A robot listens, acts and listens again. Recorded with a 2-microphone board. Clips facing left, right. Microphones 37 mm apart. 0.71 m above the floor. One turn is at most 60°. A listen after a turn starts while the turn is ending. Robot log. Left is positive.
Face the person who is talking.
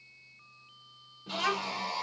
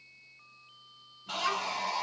note: The child speaking: about 45° left or 135° left.
cmd yaw +45
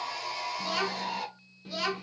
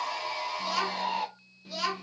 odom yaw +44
note: So it is at 10° left.
cmd yaw +10
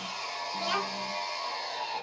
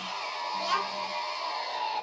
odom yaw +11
end: Found it: a child speaking, straight ahead.